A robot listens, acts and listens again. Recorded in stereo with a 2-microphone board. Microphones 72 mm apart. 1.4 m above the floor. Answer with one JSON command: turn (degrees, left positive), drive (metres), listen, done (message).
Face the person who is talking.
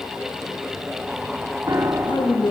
{"turn": 90}
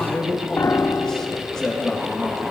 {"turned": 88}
{"turn": 10}
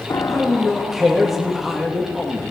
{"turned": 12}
{"done": "Found it: a man speaking, straight ahead, 2 to 4 m away."}